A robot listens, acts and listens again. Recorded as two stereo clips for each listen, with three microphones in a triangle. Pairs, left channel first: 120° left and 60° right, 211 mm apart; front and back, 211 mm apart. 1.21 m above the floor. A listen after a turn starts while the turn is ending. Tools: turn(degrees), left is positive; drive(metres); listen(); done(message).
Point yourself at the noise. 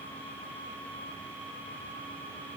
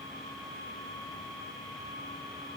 listen()
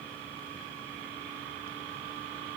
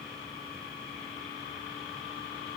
listen()
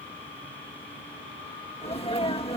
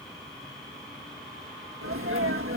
turn(degrees=-175)
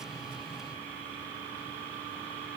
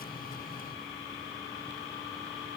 done("I heard a sneeze from this way, but can't make it out now.")